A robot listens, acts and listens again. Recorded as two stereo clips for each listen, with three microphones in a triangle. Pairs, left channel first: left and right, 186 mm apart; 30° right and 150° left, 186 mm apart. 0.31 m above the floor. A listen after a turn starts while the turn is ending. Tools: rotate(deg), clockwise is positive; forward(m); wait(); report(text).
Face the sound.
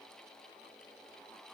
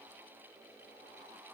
wait()
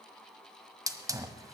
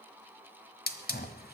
rotate(20)
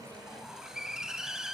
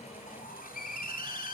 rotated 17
report("Facing the hiss.")